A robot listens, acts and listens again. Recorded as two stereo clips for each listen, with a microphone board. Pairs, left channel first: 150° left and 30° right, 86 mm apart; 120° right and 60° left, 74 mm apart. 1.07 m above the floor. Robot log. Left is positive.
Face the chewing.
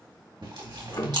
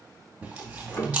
note: The chewing: 10° right.
cmd yaw -10
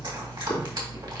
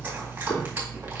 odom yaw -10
cmd idle
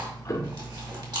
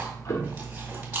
end: Found it: chewing, straight ahead.